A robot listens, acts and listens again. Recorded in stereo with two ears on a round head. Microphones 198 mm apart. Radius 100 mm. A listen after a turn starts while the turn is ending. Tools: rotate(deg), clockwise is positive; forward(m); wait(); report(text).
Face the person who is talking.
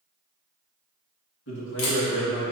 rotate(-70)
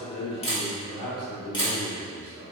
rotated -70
rotate(-10)
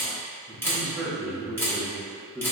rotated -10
rotate(10)
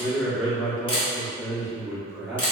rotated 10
report("Facing the man speaking.")